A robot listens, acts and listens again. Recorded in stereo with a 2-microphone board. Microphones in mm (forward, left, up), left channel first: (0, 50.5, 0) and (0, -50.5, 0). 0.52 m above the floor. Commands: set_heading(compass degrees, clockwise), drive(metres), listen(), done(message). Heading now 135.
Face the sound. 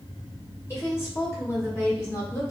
set_heading(105)
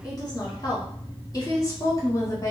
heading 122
set_heading(92)
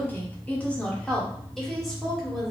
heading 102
done("Found it: a woman speaking, straight ahead.")